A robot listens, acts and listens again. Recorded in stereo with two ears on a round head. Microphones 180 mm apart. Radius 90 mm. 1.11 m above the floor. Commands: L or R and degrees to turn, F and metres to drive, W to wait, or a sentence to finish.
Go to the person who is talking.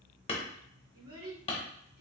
R70
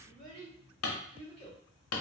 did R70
R40
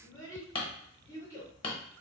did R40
L15
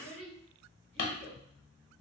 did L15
F1.0
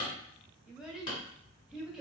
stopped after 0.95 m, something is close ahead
I am next to the child speaking.